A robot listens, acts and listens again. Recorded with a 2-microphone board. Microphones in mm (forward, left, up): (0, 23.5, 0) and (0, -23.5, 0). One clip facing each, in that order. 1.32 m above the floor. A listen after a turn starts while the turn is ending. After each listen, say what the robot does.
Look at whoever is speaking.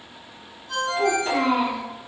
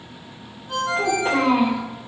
Turn 90° right.
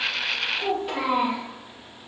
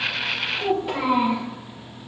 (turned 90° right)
Found it: a child speaking, straight ahead.